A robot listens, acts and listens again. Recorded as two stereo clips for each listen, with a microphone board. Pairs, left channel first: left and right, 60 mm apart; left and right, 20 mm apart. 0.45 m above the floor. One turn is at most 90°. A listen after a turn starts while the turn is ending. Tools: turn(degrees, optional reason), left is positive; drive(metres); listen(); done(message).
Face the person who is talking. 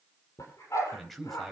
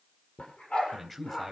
turn(degrees=30)
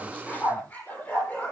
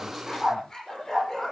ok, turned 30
listen()
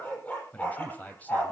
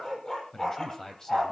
turn(degrees=90, reason="So it is at 150° left.")
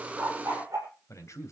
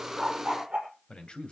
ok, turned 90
turn(degrees=60, reason="The man speaking is now 60° left.")
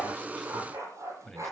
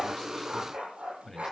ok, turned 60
done("Facing the man speaking, 2 to 4 m away.")